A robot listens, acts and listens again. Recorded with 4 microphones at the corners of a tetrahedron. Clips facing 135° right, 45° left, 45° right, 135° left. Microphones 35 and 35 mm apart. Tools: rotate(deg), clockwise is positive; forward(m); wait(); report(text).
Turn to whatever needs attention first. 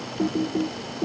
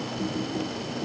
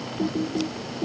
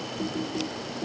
wait()
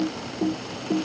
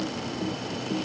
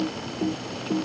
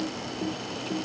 wait()
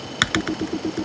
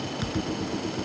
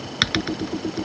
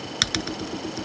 report("I can't make out anything urgent, only typing on a keyboard.")